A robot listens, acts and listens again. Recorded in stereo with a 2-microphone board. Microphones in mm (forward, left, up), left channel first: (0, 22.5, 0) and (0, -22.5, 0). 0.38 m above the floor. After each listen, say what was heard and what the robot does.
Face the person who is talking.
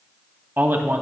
The man speaking: about 50° right or 130° right. Turn 50° right.
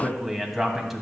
Facing the man speaking.